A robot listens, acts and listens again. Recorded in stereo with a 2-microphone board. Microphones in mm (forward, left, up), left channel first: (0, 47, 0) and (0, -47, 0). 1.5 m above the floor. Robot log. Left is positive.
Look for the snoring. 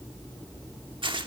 cmd idle
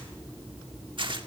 cmd idle
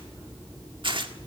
end: I can't make out snoring to turn to.